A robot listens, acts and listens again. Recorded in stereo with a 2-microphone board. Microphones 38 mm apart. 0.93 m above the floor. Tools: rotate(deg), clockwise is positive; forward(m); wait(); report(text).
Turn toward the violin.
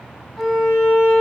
rotate(-30)
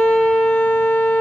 rotate(-140)
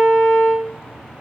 report("Found it: a violin, straight ahead, under 1 m away.")